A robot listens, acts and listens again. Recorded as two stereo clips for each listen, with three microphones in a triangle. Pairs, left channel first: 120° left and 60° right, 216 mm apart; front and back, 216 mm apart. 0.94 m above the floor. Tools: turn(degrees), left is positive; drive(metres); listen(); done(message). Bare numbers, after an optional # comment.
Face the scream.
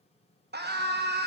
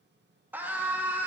# The scream: 100° right.
turn(-100)
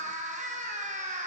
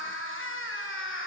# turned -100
# The scream is now 10° right.
turn(-10)
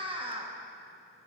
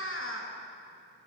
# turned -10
done("Found it: a scream, straight ahead.")